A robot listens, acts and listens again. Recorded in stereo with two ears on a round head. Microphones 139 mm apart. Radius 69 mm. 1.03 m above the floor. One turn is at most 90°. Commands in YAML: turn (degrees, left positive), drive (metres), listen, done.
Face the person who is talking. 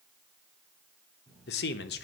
turn: 75
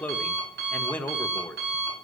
turn: 10
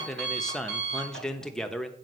done: "Facing the man speaking, under 1 m away."